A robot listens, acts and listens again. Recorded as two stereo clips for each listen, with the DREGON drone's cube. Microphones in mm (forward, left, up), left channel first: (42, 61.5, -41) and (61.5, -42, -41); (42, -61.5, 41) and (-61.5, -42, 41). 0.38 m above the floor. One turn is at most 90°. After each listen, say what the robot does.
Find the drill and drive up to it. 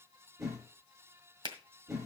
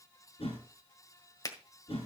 Keep listening.
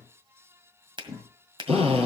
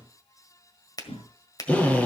Turn 90° right.
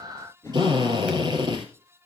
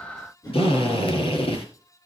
Turn 35° right.
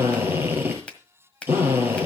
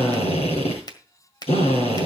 Turn 10° right.
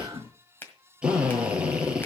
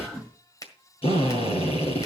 Drive 1.0 m forward.
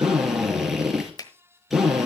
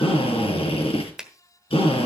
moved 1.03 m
Turn 10° left.
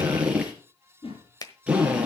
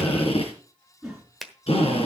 Drive 1.0 m forward.
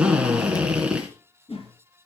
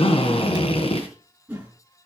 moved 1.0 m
Drive 1.0 m forward.
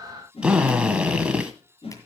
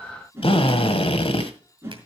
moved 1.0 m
Drive 1.0 m forward.
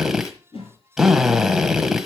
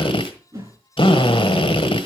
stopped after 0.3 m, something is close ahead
I am next to the drill.